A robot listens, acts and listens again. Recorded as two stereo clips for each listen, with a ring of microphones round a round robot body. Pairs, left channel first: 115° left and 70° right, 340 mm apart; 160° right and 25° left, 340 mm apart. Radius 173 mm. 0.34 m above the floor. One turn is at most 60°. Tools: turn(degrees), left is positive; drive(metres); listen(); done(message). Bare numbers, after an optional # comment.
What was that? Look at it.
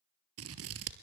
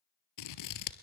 # The scissors: 120° right.
turn(-60)
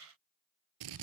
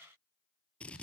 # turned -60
# The scissors is now 70° right.
turn(-60)
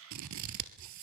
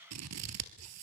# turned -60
# The scissors is now 25° right.
turn(-25)
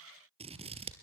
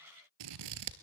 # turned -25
done("Facing the scissors.")